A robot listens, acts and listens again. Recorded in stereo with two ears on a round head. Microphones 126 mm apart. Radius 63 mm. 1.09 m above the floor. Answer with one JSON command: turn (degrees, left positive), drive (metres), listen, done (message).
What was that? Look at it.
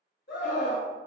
{"turn": 75}
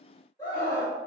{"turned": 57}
{"turn": 20}
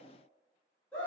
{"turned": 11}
{"turn": 10}
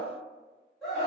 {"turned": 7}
{"done": "Found it: a scream, straight ahead."}